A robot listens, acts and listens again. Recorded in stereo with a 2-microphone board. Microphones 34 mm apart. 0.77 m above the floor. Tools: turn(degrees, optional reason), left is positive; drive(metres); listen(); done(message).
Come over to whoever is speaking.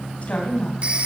turn(degrees=45, reason="The woman speaking: about 45° left or 135° left.")
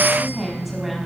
drive(metres=1.0)
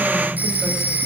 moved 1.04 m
listen()
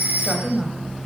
drive(metres=1.0)
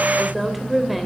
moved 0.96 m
drive(metres=1.0)
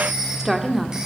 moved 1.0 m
drive(metres=1.0)
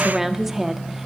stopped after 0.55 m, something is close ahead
turn(degrees=-10, reason="The woman speaking is now 10° right.")
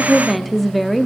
done("I am next to the woman speaking.")